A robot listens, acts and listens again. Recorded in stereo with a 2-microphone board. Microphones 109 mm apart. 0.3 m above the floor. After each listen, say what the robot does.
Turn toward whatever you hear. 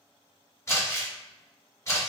Turn 30° left.
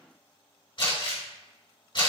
Turn 120° left.
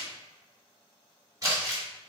Turn 35° right.
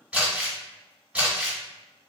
Turn 15° right.
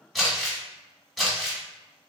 Facing the crumpling.